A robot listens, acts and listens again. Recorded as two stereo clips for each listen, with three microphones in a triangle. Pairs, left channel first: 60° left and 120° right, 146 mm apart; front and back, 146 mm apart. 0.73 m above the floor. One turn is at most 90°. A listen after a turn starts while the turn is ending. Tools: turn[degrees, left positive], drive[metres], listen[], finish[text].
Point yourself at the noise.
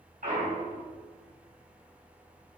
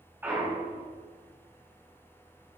Thought: The clunk: 105° right.
Action: turn[-90]
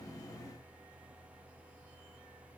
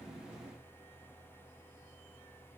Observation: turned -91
Thought: Nothing new. It was at 10° right.
Action: turn[-10]
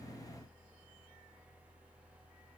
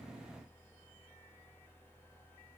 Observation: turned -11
Action: finish[Facing where the clunk came from. I can't hear it now.]